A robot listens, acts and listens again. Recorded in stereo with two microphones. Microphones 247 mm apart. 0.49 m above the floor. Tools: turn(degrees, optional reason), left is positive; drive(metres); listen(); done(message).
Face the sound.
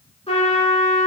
turn(degrees=25, reason="The trumpet: about 25° left or 155° left.")
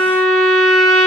done("Facing the trumpet, 2 to 4 m away.")